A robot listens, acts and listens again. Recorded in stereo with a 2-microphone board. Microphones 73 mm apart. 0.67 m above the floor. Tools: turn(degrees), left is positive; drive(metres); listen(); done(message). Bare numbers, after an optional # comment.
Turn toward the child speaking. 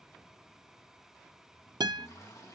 listen()
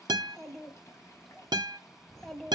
turn(30)
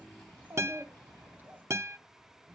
# So it is at 25° right.
turn(-25)
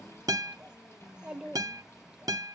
# The child speaking is now 10° right.
turn(-10)
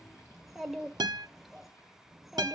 done("Facing the child speaking, 1 to 2 m away.")